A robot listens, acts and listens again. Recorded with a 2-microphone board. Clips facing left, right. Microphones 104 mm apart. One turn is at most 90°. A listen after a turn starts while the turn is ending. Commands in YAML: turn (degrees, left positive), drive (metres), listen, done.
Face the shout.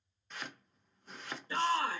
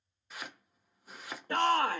turn: -55
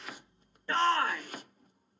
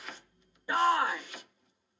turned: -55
turn: -10
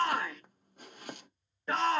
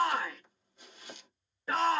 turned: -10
done: "Found it: a shout, straight ahead, under 1 m away."